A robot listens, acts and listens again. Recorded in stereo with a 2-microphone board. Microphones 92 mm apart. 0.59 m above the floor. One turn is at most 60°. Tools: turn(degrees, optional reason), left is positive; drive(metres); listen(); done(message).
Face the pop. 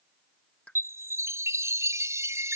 turn(degrees=30)
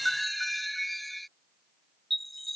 listen()
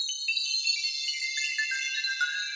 done("I heard a pop, but can't make it out now. It was about 20° right or 140° left.")